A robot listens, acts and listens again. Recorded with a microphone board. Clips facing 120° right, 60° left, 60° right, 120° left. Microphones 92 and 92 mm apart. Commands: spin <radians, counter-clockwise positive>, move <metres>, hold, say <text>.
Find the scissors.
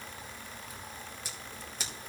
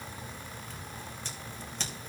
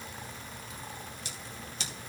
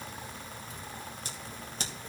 spin 2.79
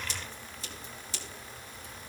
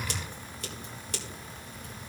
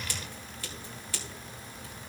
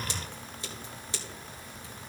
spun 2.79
spin 0.96
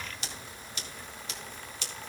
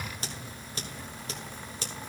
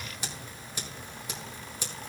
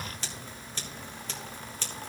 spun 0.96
spin 0.26
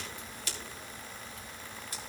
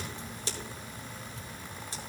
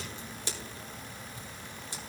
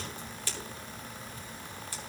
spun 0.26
say Found it: scissors, straight ahead.